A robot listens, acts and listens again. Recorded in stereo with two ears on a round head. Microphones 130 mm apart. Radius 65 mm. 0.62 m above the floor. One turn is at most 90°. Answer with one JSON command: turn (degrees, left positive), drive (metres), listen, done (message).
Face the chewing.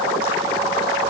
{"listen": true}
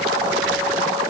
{"listen": true}
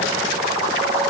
{"done": "I can't make out chewing."}